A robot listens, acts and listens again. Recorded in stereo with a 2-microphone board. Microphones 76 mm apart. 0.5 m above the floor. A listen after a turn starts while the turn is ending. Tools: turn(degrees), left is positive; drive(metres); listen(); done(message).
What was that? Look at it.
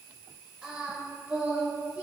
turn(degrees=-15)
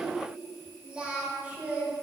turn(degrees=-20)
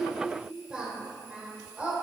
turn(degrees=-20)
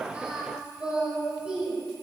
turn(degrees=-30)
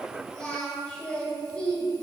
turn(degrees=15)
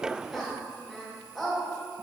done("Facing the singing, 2 to 4 m away.")